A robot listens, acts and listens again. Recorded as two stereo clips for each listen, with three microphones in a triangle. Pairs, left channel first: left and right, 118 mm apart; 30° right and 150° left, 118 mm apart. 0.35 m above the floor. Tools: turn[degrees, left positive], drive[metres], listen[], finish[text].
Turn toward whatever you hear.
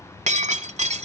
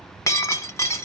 Thought: The breaking glass: 95° right.
Action: turn[-95]
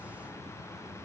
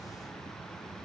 Action: finish[Facing where the breaking glass came from. I can't hear it now.]